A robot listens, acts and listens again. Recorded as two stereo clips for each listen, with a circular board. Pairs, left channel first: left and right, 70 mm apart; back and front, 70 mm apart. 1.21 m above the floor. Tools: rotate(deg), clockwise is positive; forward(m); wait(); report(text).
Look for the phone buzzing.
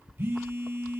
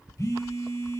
rotate(145)
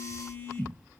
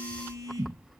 rotate(-25)
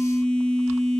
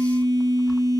rotate(-10)
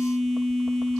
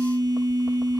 report("Facing the phone buzzing.")